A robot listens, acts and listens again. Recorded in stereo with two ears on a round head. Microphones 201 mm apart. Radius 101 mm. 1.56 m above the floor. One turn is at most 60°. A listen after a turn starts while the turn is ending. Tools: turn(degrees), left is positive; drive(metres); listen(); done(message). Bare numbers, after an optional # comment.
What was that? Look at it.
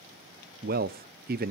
# The man speaking: about 40° right or 140° right.
turn(-40)
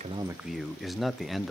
done("Found it: a man speaking, straight ahead.")